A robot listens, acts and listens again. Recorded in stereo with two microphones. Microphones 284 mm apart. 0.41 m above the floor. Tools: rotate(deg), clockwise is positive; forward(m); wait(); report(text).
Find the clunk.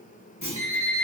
rotate(-70)
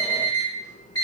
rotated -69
wait()
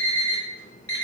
report("I heard a clunk, but can't make it out now. It was about straight ahead or 40° left.")